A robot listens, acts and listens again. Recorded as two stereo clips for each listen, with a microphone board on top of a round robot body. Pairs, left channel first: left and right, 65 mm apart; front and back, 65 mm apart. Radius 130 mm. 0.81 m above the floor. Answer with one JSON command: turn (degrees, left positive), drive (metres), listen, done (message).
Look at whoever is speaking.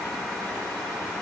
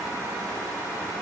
{"listen": true}
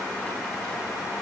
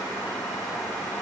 {"listen": true}
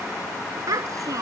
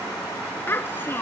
{"turn": -55}
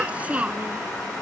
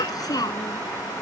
{"turn": -20}
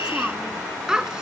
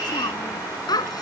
{"turn": -10}
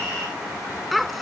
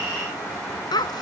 {"done": "Found it: a child speaking, straight ahead."}